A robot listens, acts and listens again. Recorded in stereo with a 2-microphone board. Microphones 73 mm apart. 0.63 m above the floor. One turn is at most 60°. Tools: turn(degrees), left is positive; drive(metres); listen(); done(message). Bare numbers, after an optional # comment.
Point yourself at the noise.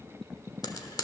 # The frying: about 65° left or 115° left.
turn(60)
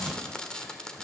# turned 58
# So it is at 10° left.
turn(10)
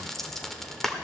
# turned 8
done("Facing the frying.")